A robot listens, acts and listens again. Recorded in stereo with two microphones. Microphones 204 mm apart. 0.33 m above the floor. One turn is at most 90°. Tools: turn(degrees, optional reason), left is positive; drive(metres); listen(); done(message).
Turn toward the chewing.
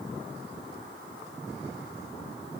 listen()
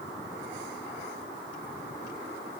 listen()
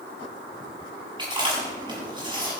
turn(degrees=-25, reason="The chewing: about 25° right or 155° right.")
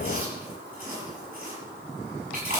turn(degrees=-90, reason="So it is at 130° right.")
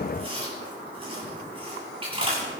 turn(degrees=-30, reason="The chewing is now 30° right.")
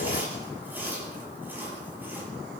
turn(degrees=-10, reason="The chewing is now 10° right.")
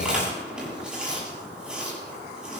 done("Found it: chewing, straight ahead.")